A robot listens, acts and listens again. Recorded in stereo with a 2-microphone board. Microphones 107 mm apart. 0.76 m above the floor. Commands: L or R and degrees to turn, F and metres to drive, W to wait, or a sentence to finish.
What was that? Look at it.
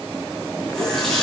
L30
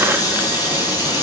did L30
L145
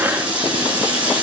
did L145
R10
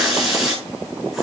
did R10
Facing the running tap.